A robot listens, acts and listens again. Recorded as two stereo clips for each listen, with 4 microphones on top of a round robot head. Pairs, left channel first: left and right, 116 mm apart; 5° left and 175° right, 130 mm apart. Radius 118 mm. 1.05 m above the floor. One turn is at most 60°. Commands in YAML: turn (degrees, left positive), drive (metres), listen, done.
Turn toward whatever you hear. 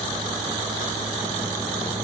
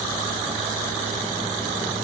listen: true
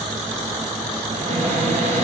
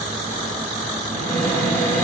turn: -60
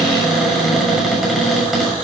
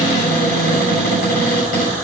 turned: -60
done: "Facing the cupboard door."